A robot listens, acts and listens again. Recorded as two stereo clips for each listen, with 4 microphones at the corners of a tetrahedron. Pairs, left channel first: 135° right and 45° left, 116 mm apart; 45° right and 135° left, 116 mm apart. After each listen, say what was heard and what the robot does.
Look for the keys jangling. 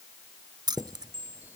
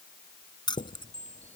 Facing the keys jangling.